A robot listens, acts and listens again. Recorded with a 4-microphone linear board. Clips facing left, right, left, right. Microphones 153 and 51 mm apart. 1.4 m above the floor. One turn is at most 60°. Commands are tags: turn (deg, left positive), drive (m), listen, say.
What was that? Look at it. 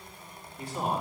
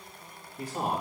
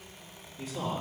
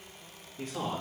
<turn deg="-40"/>
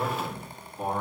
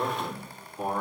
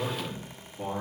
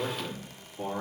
<say>Facing the man speaking.</say>